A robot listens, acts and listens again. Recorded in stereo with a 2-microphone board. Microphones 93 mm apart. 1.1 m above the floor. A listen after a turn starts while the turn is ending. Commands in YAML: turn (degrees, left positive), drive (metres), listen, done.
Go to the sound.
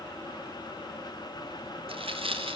turn: -75
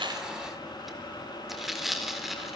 drive: 1.0
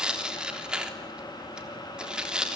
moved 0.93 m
turn: -10
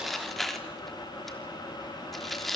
drive: 1.0
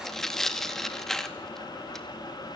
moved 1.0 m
drive: 1.0
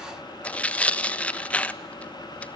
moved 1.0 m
turn: 15
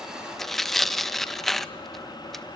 drive: 1.0
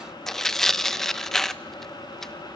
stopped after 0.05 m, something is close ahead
done: "I am next to the tearing paper."